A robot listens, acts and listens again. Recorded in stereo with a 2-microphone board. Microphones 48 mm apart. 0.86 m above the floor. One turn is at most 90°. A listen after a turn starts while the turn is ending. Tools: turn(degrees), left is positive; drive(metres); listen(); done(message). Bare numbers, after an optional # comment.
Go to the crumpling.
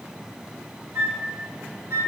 listen()
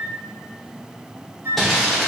turn(30)
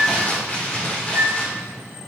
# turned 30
# So it is at 150° left.
turn(90)
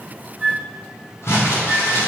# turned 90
# The crumpling is now 75° left.
turn(75)
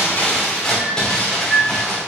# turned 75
# The crumpling is now 10° left.
turn(10)
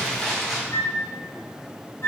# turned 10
drive(1.0)
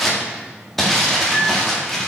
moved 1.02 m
drive(1.0)
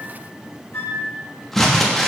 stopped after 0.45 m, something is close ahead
done("I am next to the crumpling.")